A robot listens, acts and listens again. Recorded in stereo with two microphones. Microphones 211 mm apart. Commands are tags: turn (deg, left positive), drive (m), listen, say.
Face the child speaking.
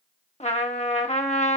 <listen/>
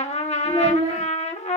<turn deg="-25"/>
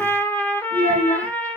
<turn deg="-115"/>
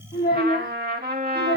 <turn deg="40"/>
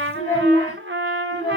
<turn deg="15"/>
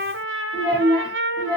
<say>Facing the child speaking, 2 to 4 m away.</say>